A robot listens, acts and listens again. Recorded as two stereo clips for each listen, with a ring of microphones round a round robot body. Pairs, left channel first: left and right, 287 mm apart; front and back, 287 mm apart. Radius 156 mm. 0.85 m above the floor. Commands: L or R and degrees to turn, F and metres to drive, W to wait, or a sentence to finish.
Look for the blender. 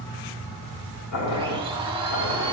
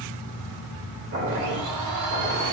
R165
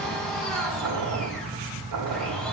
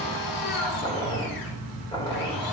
Found it: a blender, straight ahead, 2 to 4 m away.